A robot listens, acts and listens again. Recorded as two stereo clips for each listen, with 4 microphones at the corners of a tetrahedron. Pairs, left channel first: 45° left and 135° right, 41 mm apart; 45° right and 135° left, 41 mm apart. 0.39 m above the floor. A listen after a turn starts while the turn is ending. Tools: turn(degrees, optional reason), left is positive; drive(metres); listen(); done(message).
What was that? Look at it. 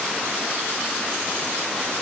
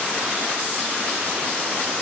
listen()
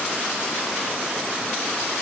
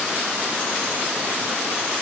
listen()
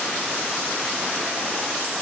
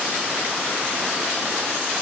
done("I can't make out anything to turn to.")